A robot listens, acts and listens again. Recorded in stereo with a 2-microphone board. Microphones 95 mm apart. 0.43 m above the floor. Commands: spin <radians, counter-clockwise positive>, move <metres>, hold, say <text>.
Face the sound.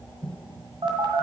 spin -1.13
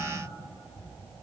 hold
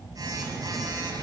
spin -0.79
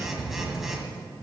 say Found it: a phone buzzing, straight ahead.